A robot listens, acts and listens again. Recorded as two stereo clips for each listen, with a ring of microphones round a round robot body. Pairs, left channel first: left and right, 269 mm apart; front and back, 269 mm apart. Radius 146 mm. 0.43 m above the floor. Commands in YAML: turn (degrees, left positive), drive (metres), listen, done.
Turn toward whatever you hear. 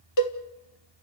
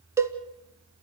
turn: 100
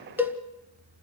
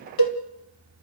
done: "Facing the cowbell."